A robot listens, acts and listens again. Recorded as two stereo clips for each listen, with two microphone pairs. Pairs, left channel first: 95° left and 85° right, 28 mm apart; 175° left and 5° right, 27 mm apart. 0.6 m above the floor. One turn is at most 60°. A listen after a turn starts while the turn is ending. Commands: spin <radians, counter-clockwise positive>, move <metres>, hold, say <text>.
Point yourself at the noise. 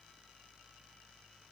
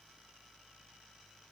hold
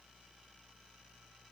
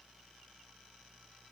hold
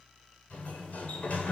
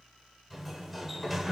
spin 1.05
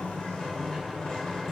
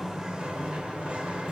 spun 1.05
spin 0.61
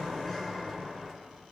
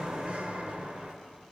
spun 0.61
spin 0.44
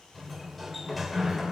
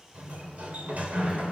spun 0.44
spin 0.17
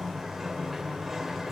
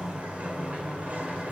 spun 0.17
say Found it: a sliding door, straight ahead.